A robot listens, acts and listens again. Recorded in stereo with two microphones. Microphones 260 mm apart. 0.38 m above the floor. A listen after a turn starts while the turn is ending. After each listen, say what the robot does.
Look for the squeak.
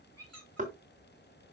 Turn 70° right.
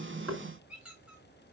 Found it: a squeak, straight ahead.